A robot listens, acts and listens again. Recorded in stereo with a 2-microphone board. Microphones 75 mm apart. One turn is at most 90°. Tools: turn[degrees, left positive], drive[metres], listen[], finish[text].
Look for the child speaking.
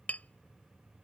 Action: listen[]
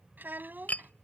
Thought: The child speaking: about 25° right or 155° right.
Action: turn[-25]
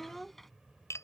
Action: finish[Found it: a child speaking, straight ahead.]